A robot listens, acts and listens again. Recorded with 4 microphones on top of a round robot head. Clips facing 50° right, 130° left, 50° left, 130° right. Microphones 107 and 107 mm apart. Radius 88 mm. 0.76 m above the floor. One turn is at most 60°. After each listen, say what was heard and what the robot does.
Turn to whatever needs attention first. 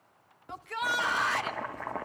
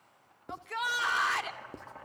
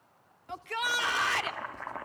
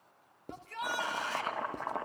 The shout: 40° left. Turn 40° left.
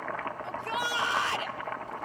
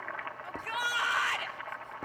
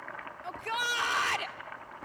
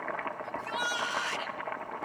The shout is now 15° left. Turn 15° left.
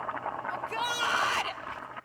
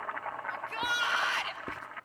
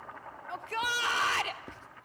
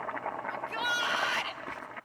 Found it: a shout, straight ahead, 2 to 4 m away.